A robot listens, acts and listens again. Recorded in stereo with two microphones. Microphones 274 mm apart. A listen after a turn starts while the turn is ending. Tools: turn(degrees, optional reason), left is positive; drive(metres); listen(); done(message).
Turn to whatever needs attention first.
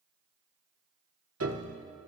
listen()
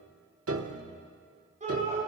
turn(degrees=-25, reason="The shout: about 25° right or 155° right.")
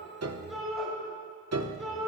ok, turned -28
done("Found it: a shout, straight ahead, over 4 m away.")